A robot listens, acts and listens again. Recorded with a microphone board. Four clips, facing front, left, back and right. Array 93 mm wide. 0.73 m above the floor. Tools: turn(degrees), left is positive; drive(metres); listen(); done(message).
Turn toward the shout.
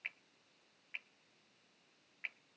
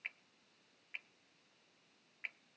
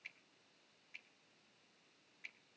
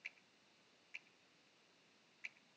listen()
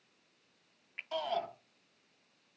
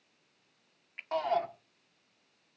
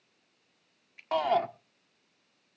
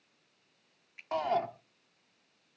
turn(degrees=-175)
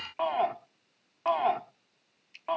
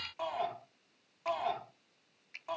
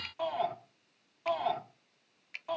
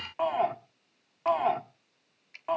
turn(degrees=-35)
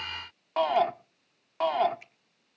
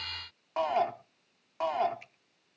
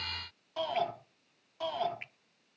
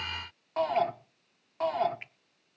turn(degrees=15)
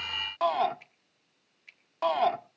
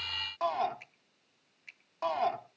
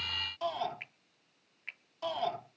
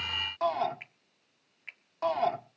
done("Facing the shout, 1 to 2 m away.")